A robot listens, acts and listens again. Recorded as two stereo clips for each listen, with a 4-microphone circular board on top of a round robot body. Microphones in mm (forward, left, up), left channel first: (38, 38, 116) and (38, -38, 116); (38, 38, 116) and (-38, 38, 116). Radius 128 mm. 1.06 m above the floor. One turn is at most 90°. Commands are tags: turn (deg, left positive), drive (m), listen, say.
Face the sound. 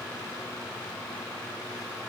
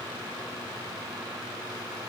<listen/>
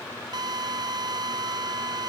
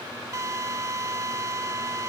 <turn deg="-90"/>
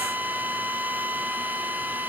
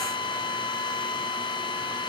<turn deg="-20"/>
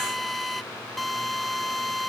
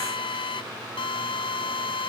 <say>Found it: a drill, straight ahead.</say>